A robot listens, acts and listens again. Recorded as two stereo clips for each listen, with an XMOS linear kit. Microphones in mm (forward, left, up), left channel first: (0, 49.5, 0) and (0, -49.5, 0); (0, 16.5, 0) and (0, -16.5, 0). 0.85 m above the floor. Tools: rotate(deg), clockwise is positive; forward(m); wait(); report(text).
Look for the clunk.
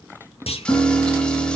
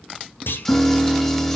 rotate(-90)
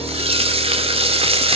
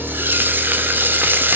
report("I heard a clunk from this way, but can't make it out now.")